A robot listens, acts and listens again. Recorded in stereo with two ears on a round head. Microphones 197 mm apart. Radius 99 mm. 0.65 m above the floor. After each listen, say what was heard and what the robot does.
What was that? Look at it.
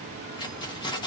The keys jangling: about 20° left or 160° left. Turn 20° left.
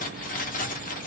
So it is at 140° left. Turn 140° left.
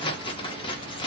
The keys jangling is now 25° left. Turn 25° left.
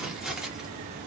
Facing the keys jangling, under 1 m away.